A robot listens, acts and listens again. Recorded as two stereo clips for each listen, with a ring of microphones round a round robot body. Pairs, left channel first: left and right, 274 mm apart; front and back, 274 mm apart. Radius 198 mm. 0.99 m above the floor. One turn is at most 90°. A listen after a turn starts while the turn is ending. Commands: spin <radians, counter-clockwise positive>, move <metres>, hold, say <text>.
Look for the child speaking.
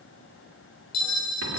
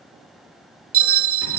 hold
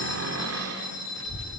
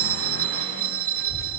spin 1.05
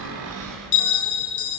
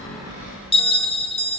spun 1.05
spin 0.17
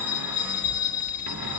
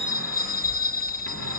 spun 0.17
spin 0.52
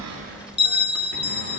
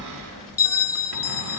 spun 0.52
spin 0.26
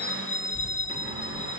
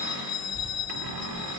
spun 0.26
say Facing the child speaking.